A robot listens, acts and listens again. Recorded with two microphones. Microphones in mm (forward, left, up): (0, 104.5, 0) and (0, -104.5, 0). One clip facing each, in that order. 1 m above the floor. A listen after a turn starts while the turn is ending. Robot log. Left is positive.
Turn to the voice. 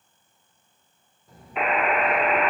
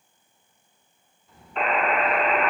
note: The child speaking: about 40° left or 140° left.
cmd yaw +40
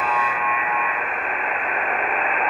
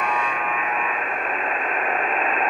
cmd idle
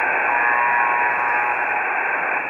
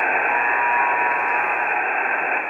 cmd idle
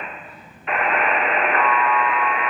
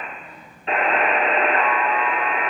end: Facing the child speaking, 2 to 4 m away.